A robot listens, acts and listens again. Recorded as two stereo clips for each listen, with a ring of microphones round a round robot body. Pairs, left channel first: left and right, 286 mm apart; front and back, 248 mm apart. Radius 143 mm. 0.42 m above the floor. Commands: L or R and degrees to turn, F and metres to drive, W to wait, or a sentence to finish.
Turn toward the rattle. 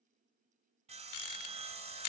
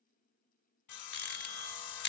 L50
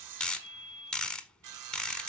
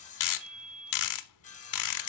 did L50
Found it: a rattle, straight ahead.